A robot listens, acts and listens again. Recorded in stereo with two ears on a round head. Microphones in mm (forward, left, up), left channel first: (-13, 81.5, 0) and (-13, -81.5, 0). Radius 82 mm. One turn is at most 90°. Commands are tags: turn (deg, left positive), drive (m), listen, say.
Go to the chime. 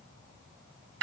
<listen/>
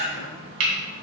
<listen/>
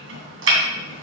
<say>I can't make out a chime to turn to.</say>